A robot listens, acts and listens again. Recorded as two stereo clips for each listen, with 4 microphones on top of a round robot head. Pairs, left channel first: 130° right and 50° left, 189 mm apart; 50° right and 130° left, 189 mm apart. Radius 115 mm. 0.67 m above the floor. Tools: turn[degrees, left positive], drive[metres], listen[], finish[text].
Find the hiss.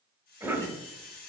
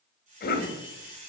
Thought: The hiss: 175° right.
Action: turn[-175]
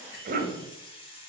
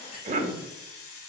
Thought: The hiss is now 65° right.
Action: turn[-65]
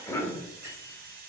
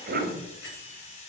Action: finish[Found it: a hiss, straight ahead, under 1 m away.]